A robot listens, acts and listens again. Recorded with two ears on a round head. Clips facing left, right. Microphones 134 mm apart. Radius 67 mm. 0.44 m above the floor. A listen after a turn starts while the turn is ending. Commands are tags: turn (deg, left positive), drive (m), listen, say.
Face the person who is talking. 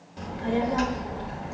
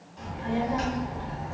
<turn deg="60"/>
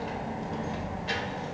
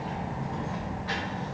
<turn deg="35"/>
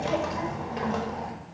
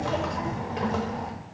<say>Found it: a child speaking, straight ahead, under 1 m away.</say>